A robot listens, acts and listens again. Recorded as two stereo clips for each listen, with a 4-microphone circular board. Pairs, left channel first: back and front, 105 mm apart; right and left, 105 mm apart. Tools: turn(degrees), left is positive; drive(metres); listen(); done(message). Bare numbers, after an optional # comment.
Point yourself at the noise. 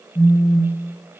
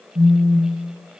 # The phone buzzing: 135° left.
turn(135)
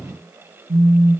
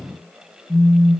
# The phone buzzing is now 15° left.
turn(15)
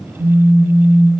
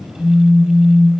done("Facing the phone buzzing, 1 to 2 m away.")